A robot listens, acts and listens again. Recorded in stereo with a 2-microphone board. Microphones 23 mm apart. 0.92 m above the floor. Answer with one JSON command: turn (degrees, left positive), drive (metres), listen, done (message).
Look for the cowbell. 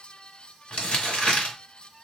{"listen": true}
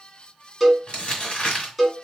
{"turn": 30}
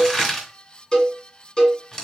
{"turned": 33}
{"turn": 135}
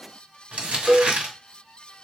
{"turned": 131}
{"done": "Found it: a cowbell, straight ahead, 1 to 2 m away."}